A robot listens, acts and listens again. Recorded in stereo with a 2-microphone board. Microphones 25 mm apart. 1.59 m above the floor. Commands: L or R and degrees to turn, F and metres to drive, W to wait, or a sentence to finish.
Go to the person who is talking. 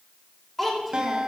L30
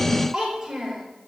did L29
R20
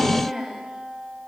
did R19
F1.0
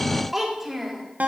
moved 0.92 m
F1.0
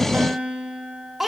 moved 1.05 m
F1.0
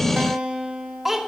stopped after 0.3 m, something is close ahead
R10
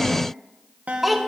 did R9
Arrived at the child speaking, straight ahead.